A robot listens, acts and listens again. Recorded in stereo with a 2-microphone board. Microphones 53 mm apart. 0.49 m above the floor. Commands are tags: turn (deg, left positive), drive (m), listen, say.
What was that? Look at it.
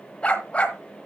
<turn deg="25"/>
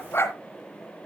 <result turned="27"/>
<turn deg="125"/>
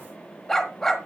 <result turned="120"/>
<turn deg="10"/>
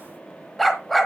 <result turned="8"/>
<say>Found it: a dog barking, straight ahead.</say>